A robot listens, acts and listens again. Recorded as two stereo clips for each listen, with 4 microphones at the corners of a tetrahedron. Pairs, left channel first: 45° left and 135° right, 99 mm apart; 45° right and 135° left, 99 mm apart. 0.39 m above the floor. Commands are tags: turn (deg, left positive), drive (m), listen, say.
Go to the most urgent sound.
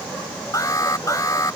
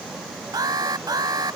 <turn deg="95"/>
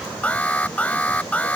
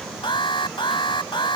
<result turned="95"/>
<turn deg="-30"/>
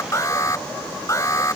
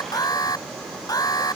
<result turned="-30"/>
<drive m="1.0"/>
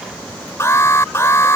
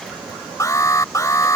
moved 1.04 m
<drive m="1.0"/>
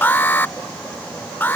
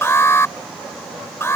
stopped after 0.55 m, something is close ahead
<turn deg="-10"/>
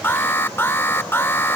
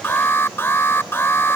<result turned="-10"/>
<say>I am next to the alarm.</say>